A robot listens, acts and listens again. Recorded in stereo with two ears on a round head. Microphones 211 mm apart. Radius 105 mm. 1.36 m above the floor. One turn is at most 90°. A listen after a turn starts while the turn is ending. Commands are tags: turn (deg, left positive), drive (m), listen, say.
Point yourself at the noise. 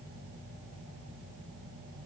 <listen/>
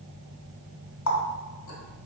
<turn deg="65"/>
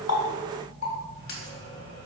<turn deg="45"/>
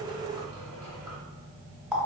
<say>Found it: a running tap, straight ahead, 1 to 2 m away.</say>